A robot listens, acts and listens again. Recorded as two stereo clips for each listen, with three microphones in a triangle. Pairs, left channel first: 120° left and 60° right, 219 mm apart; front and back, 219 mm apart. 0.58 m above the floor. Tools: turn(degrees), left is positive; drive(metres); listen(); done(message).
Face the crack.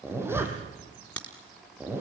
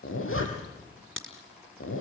turn(degrees=-155)
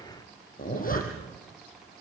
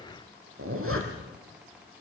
done("Facing where the crack came from. I can't hear it now.")